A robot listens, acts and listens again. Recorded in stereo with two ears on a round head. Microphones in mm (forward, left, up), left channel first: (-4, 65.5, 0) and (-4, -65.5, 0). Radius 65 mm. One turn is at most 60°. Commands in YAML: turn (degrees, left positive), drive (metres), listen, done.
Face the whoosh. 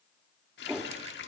turn: -30
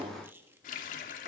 turn: -60
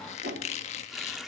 turn: -60
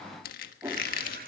turn: -20
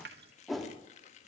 done: "Found it: a whoosh, straight ahead, 2 to 4 m away."